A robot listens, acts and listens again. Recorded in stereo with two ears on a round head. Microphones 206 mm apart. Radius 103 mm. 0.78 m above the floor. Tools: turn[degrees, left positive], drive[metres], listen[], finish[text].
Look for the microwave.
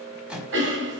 Action: turn[-30]
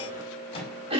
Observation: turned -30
Thought: So it is at 25° left.
Action: turn[25]
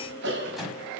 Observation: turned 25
Action: finish[Found it: a microwave, straight ahead, over 4 m away.]